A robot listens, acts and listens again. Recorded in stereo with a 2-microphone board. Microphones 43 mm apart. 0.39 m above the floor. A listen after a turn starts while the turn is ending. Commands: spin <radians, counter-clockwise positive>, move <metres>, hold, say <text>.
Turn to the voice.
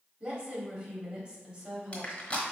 spin -0.52
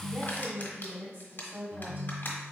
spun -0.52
spin -2.09
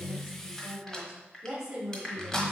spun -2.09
spin -0.26
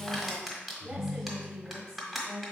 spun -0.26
say Found it: a woman speaking, straight ahead, 1 to 2 m away.